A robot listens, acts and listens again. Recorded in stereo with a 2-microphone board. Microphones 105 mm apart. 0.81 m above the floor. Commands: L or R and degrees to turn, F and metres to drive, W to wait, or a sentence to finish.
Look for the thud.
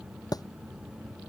L35
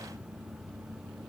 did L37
W
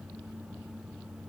I heard a thud, but can't make it out now. It was about straight ahead or 105° left.